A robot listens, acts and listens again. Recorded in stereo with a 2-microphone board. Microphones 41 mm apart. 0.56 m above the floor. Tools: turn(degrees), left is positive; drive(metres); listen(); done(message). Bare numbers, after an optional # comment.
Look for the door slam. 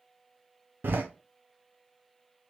# The door slam: about 55° right or 125° right.
turn(-55)
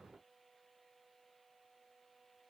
listen()
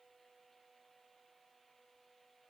done("I heard a door slam, but can't make it out now. It was about straight ahead or 70° right.")